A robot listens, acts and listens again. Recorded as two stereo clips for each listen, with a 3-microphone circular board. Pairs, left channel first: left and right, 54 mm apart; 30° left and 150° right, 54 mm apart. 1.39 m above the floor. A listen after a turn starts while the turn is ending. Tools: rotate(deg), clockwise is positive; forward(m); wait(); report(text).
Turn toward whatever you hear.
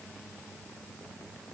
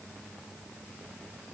wait()
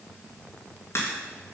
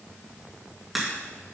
rotate(-120)
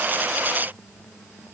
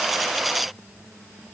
report("I heard a crack from this way, but can't make it out now.")